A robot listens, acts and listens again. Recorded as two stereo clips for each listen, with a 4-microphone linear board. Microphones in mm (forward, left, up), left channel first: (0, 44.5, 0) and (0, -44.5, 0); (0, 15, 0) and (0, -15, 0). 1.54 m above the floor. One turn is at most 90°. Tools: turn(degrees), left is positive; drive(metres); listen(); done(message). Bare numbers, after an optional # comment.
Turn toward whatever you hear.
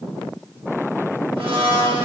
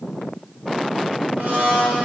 turn(-90)
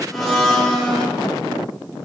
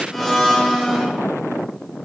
done("Facing the blender.")